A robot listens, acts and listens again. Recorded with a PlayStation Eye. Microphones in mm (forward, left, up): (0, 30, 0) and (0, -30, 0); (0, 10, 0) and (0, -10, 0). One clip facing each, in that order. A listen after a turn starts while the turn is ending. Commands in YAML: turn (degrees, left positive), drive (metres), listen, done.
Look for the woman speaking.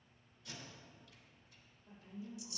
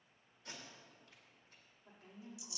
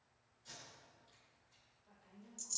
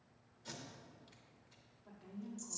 turn: -75
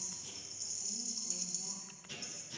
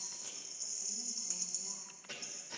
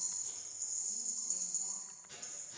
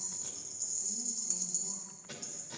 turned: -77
listen: true
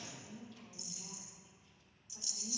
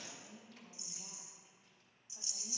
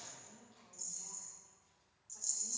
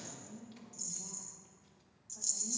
turn: 30
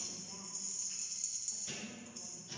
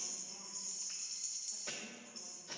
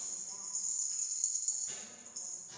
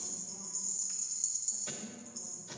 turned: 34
listen: true
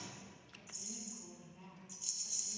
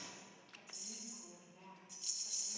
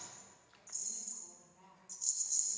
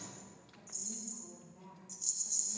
turn: 10
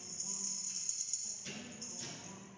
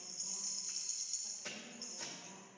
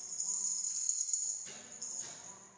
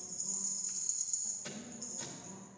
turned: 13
done: "Facing the woman speaking, 2 to 4 m away."